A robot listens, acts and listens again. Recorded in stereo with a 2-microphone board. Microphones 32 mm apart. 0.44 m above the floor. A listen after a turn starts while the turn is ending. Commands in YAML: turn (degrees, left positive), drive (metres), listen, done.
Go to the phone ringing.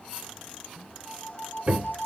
turn: 65
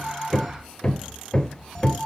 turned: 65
drive: 1.0
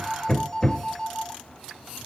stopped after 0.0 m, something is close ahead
turn: 10
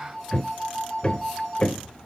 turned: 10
done: "Something is in my way. I am facing the phone ringing but have not reached it."